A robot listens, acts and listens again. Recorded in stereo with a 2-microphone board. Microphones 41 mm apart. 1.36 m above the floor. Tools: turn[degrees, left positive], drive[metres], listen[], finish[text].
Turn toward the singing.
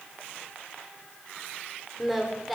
Action: turn[30]
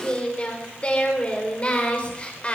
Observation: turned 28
Thought: So it is at 150° left.
Action: turn[150]
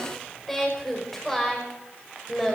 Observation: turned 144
Action: finish[Found it: singing, straight ahead.]